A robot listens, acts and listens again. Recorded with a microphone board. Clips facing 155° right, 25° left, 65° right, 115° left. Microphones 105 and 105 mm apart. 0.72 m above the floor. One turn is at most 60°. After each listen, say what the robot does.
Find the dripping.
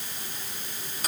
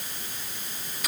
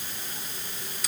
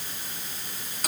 Keep listening.
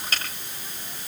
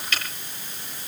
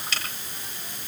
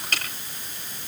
Keep listening.
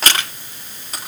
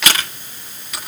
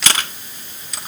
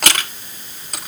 I can't make out dripping, only crushing.